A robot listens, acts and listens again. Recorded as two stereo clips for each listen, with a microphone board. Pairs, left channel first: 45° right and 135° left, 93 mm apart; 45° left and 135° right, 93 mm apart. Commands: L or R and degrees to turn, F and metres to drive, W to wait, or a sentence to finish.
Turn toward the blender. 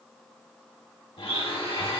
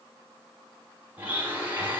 R60
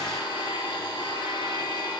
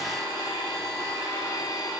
Found it: a blender, straight ahead.